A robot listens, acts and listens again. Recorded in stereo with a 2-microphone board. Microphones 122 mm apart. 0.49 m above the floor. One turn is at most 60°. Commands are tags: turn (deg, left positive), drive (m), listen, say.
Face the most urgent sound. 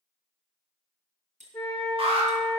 <turn deg="-50"/>
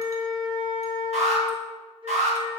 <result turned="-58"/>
<turn deg="-60"/>
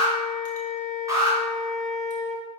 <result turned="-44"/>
<turn deg="-30"/>
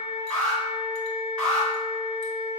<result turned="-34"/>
<say>Found it: an alarm, straight ahead.</say>